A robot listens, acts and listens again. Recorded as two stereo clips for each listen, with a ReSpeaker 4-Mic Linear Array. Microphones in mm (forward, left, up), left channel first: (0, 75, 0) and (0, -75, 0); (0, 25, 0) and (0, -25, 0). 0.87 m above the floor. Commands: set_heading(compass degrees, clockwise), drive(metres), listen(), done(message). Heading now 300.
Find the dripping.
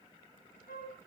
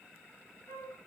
listen()
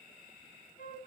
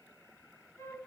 listen()
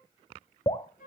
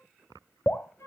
set_heading(265)
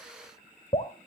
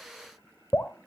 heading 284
set_heading(154)
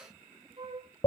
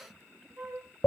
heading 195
set_heading(155)
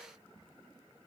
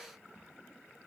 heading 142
set_heading(152)
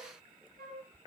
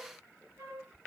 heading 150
listen()
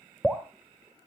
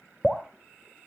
done("Facing the dripping, 1 to 2 m away.")